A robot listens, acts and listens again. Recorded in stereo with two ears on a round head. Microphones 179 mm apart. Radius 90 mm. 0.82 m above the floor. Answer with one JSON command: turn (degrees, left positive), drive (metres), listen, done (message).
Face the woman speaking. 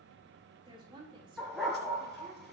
{"turn": -25}
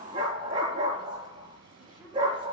{"listen": true}
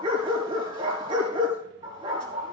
{"listen": true}
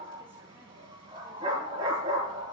{"done": "I heard a woman speaking, but can't make it out now. It was about straight ahead or 130° right."}